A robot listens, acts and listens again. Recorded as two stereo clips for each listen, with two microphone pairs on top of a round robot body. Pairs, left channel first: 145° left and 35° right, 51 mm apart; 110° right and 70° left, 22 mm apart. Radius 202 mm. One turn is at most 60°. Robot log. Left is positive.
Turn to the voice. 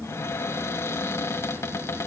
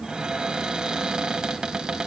cmd idle
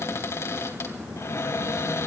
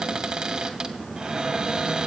cmd idle
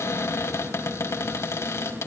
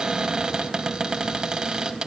end: I can't make out anyone speaking to turn to.